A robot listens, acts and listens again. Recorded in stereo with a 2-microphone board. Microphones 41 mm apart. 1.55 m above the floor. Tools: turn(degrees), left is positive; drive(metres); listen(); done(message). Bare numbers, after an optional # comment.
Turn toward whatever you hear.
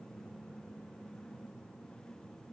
listen()
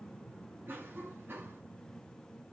# The cough: about 60° right or 120° right.
turn(-60)
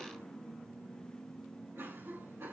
# So it is at 65° right.
turn(-65)
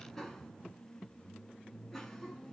done("Found it: a cough, straight ahead.")